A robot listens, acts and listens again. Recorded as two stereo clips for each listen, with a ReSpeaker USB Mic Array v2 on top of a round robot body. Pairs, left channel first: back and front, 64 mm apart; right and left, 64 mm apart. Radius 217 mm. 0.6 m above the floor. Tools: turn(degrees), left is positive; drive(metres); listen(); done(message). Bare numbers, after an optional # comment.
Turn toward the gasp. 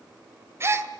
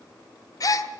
# The gasp: 55° right.
turn(-55)
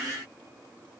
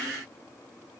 done("I heard a gasp from this way, but can't make it out now.")